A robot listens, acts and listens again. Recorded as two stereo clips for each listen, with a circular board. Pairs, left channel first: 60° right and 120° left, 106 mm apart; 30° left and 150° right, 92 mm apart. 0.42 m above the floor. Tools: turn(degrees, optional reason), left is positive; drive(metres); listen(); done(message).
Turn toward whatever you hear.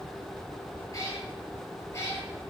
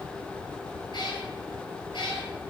done("Facing the cat meowing, over 4 m away.")